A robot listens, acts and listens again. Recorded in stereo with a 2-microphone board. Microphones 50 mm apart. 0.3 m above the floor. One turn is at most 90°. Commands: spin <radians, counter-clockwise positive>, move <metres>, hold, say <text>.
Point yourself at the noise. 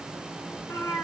spin 1.57
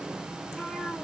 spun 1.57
say Facing the cat meowing.